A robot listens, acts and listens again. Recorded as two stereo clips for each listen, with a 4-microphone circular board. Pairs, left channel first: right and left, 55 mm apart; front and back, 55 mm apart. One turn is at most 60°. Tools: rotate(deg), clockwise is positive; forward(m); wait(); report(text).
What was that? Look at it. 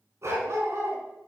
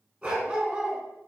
rotate(-60)
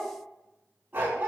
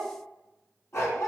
rotate(-35)
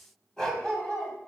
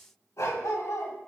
rotate(15)
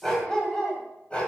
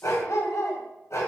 rotate(20)
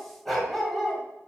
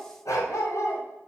report("Facing the dog barking, 2 to 4 m away.")